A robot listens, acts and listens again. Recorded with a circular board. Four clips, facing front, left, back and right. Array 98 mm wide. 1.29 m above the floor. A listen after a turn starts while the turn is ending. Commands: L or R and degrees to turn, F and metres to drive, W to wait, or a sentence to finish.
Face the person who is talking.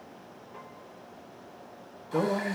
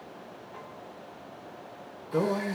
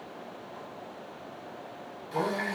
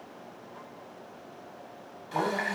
L50
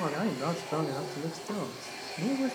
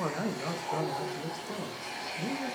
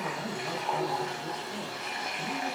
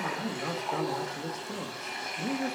Found it: a man speaking, straight ahead, 1 to 2 m away.